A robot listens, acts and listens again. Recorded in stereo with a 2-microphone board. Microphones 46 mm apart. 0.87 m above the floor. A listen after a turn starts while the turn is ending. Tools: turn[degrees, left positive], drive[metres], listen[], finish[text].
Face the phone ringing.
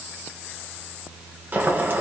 Action: listen[]
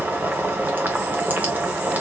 Action: listen[]
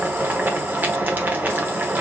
Action: finish[I can't make out a phone ringing to turn to.]